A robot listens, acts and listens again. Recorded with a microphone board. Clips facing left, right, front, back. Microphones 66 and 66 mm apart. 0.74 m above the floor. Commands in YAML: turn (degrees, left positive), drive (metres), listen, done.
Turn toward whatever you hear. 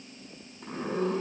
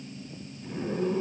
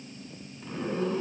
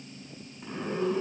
turn: 100
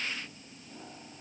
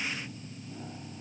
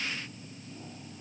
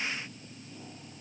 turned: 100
listen: true
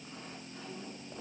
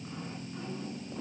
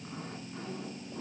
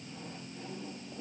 listen: true
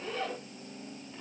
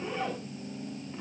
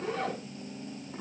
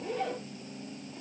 turn: -15
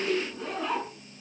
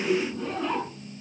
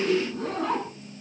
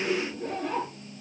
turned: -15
done: "Found it: a zipper, straight ahead."